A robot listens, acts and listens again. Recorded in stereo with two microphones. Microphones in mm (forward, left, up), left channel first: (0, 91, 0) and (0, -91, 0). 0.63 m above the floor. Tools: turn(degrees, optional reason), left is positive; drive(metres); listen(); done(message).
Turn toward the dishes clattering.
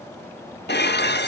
turn(degrees=70, reason="The dishes clattering: about 70° left or 110° left.")
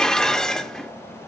done("Facing the dishes clattering, under 1 m away.")